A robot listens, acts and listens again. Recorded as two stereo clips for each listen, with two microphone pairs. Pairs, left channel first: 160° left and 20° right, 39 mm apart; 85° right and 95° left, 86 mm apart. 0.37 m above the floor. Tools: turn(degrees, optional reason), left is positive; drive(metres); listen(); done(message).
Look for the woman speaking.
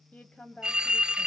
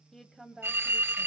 turn(degrees=-175, reason="The woman speaking: 175° right.")
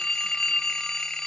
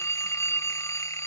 listen()
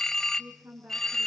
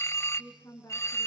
turn(degrees=-30, reason="The woman speaking is now 30° right.")
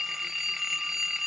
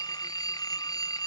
listen()
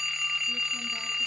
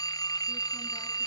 listen()
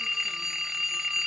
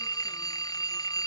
done("Facing where the woman speaking came from. I can't hear it now.")